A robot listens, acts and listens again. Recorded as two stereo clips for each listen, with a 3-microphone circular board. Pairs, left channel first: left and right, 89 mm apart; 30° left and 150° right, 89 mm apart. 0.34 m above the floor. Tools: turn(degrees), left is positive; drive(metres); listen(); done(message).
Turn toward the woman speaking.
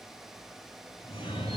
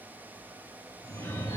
listen()
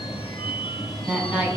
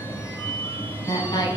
turn(degrees=-15)
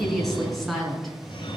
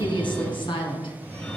done("Found it: a woman speaking, straight ahead.")